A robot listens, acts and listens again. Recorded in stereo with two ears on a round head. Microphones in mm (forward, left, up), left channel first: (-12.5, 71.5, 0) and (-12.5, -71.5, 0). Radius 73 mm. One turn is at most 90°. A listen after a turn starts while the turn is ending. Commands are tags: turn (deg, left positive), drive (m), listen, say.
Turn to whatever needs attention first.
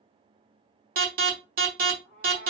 <turn deg="-60"/>
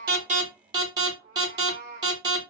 <turn deg="-30"/>
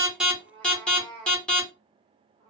<say>Facing the alarm, 1 to 2 m away.</say>